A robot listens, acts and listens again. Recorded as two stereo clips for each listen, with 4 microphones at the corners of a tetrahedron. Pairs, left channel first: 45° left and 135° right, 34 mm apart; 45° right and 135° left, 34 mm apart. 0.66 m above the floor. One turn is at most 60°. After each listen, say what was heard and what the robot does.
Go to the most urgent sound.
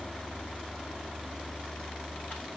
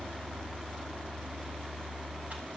Keep listening.
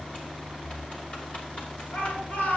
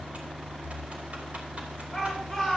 The shout: 40° left. Turn 40° left.
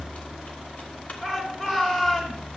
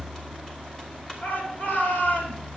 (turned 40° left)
The shout is now 15° right. Turn 15° right.
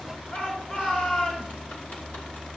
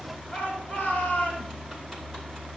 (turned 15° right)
Drive 1.0 m forward.
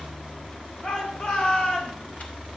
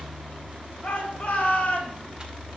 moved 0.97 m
Drive 1.0 m forward.
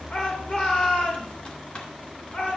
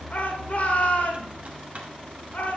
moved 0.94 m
Drive 1.0 m forward.
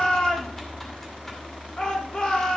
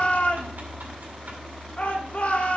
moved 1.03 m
The shout is now 10° right. Turn 10° right.
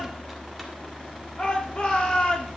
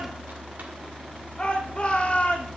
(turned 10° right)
Drive 1.0 m forward.
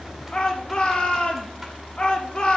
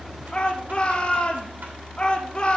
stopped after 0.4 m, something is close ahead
I am next to the shout.